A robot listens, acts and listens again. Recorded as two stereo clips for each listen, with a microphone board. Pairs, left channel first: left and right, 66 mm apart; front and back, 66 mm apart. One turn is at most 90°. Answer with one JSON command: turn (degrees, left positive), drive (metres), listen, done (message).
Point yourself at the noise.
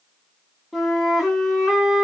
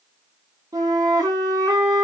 {"turn": -90}
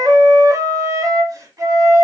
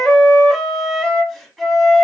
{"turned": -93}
{"turn": -80}
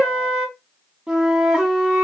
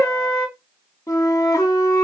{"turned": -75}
{"done": "Facing the flute, under 1 m away."}